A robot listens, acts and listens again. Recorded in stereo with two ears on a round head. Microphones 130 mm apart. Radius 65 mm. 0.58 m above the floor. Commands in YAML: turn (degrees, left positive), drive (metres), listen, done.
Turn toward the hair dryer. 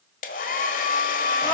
turn: 65
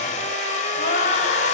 turn: 50
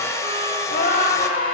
turn: 20
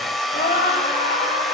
done: "Facing the hair dryer, 1 to 2 m away."